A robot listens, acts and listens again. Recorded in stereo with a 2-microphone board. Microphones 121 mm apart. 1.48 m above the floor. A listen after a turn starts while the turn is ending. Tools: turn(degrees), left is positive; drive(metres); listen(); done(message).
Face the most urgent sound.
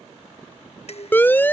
turn(degrees=15)
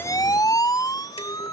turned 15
turn(degrees=150)
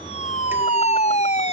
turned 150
turn(degrees=70)
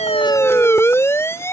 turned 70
turn(degrees=20)
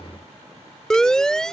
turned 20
done("Facing the siren.")